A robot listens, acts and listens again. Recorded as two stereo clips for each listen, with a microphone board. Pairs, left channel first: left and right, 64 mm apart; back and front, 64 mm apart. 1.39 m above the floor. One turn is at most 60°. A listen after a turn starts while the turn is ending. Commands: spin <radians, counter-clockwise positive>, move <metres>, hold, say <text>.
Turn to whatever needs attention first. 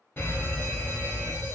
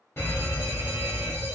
spin 1.05
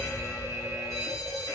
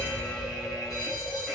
spin 1.05
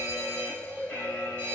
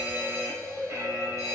spin 0.52
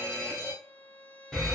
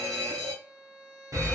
say Facing the fire alarm.